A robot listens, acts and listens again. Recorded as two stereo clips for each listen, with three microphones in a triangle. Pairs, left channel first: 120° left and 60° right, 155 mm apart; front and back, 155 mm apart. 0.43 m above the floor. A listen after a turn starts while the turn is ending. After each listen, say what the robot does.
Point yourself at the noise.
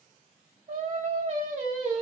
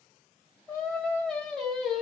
Turn 90° right.
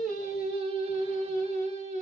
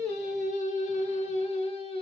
Turn 45° right.
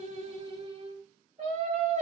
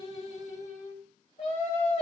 Turn 40° right.
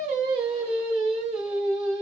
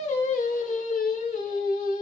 Turn 20° right.
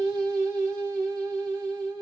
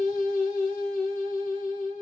Facing the singing.